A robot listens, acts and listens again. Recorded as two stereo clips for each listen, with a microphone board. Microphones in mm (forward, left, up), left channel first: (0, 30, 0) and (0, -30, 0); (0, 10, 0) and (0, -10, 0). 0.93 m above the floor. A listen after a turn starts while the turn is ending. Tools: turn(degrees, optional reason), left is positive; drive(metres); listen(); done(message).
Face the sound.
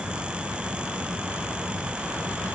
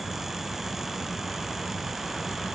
listen()
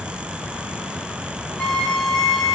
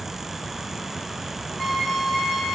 turn(degrees=30)
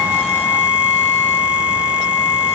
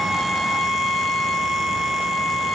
turn(degrees=155, reason="So it is at 155° left.")
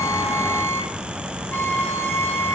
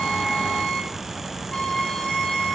turn(degrees=45, reason="The violin is now 45° left.")
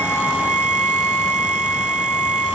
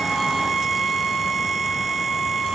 turn(degrees=25, reason="The violin is now 25° left.")
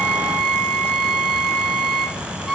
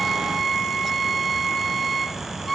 turn(degrees=15, reason="The violin is now 15° left.")
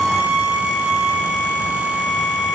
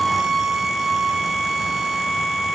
done("Found it: a violin, straight ahead, over 4 m away.")